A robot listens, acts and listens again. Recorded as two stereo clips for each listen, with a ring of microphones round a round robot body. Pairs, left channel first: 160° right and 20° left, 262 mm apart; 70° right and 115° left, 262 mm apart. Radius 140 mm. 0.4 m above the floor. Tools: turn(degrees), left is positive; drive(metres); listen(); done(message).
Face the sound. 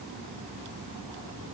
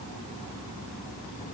listen()
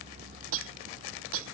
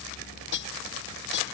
turn(degrees=-20)
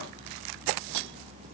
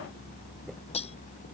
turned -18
done("Found it: cutlery clinking, straight ahead.")